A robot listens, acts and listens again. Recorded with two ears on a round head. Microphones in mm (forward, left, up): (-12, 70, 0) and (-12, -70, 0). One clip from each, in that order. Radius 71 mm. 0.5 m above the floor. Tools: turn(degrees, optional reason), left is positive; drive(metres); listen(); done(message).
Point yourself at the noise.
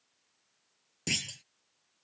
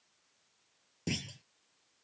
turn(degrees=50, reason="The clunk: about 50° left or 130° left.")
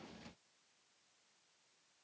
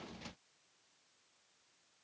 listen()
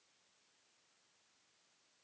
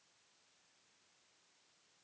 done("I heard a clunk, but can't make it out now. It was about straight ahead or 80° left.")